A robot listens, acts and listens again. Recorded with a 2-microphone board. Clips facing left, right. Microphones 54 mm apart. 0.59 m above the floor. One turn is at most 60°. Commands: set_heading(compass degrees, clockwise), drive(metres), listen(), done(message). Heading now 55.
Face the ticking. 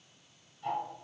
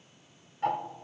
set_heading(115)
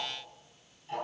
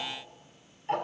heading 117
set_heading(172)
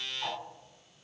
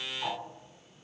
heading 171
done("Facing the ticking.")